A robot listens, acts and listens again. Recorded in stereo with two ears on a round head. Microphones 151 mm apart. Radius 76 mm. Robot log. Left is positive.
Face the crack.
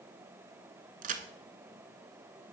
note: The crack: about 50° right or 130° right.
cmd yaw -50
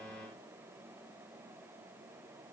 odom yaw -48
cmd idle
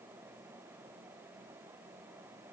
end: I heard a crack, but can't make it out now. It was about 5° right or 80° right.